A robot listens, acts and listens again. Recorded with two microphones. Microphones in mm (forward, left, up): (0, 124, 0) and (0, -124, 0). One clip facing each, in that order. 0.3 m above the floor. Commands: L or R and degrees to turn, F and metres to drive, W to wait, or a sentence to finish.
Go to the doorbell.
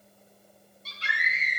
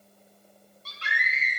W
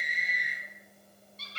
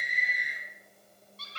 W
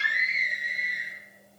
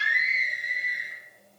I can't make out a doorbell to turn to.